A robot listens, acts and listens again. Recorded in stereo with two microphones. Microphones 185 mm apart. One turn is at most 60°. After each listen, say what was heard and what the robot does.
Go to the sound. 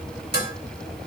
The dishes clattering: about 65° left or 115° left. Turn 60° left.
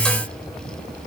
Keep listening.
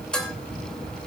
Drive 1.0 m forward.
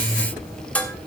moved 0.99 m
The dishes clattering is now 10° left. Turn 10° left.
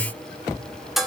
Drive 1.0 m forward.
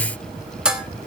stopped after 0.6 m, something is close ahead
Arrived at the dishes clattering, straight ahead.